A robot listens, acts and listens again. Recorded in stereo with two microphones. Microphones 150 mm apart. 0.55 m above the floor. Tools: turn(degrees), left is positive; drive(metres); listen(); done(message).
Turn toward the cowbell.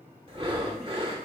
listen()
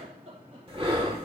listen()
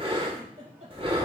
done("I can't make out a cowbell to turn to.")